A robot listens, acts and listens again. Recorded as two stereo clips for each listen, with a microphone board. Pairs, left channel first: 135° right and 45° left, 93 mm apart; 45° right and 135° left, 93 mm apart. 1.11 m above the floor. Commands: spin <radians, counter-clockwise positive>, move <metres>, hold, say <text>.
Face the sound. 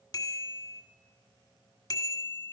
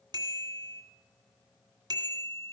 spin 3.14
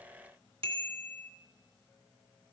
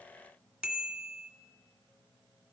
spin 1.13
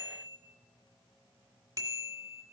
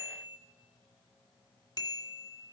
say Facing the bicycle bell, 2 to 4 m away.